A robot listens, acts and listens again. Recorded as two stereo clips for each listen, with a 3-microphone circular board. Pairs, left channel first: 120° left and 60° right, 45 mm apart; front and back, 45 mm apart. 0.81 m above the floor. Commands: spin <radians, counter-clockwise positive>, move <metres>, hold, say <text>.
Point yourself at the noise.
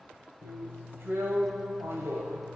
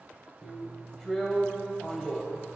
spin -1.48
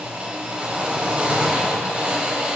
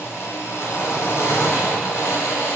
say Found it: a drill, straight ahead, 2 to 4 m away.